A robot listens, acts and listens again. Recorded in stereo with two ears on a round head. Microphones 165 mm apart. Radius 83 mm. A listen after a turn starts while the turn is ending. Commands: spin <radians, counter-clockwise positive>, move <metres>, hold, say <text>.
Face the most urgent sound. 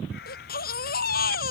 spin 0.96
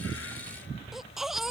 say Facing the baby crying.